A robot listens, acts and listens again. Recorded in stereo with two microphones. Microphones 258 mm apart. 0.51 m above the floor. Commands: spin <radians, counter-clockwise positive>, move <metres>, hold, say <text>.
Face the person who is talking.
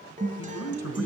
spin 1.22
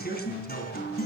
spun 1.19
spin 0.70
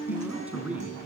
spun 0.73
say Found it: a man speaking, straight ahead, 2 to 4 m away.